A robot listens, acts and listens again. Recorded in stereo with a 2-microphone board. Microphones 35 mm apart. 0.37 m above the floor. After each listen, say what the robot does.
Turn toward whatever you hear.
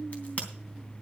Turn 45° left.
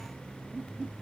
Keep listening.
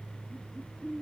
I heard a crack, but can't make it out now. It was about straight ahead or 90° left.